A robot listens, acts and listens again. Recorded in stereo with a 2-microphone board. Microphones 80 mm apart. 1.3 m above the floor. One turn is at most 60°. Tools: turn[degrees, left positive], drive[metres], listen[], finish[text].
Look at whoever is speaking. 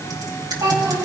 Thought: The child speaking: about 45° right or 135° right.
Action: turn[-45]
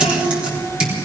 Action: listen[]
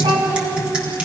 Thought: So it is at 85° right.
Action: turn[-60]
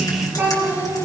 Thought: The child speaking is now 25° right.
Action: turn[-25]
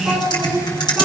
Action: finish[Facing the child speaking.]